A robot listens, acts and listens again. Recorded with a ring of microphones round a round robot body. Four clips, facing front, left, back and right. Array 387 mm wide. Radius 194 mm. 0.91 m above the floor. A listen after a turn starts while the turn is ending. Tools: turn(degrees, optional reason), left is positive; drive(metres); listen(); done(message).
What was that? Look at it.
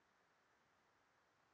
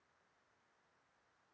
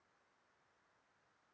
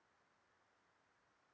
listen()
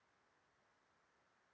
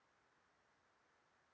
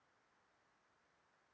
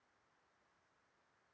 listen()
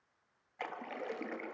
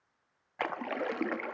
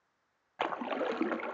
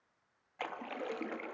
turn(degrees=145, reason="The splash: 145° left.")
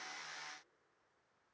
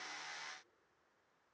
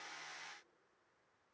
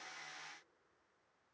done("Facing where the splash came from. I can't hear it now.")